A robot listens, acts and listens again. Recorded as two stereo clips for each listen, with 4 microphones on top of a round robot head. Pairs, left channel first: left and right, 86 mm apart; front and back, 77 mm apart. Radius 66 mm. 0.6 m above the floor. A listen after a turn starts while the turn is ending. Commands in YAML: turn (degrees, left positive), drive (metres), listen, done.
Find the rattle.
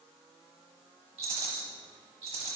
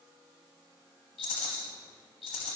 turn: -50
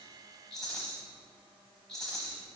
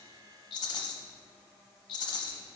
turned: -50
done: "Facing the rattle, under 1 m away."